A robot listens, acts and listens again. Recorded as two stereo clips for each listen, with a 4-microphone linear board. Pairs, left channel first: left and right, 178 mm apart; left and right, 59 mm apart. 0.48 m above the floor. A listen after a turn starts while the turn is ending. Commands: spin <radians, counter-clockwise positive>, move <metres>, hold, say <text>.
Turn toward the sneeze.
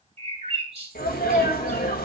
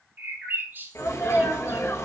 spin 1.05
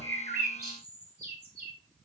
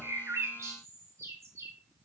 hold
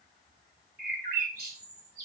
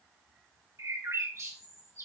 say I heard a sneeze, but can't make it out now. It was about straight ahead or 60° left.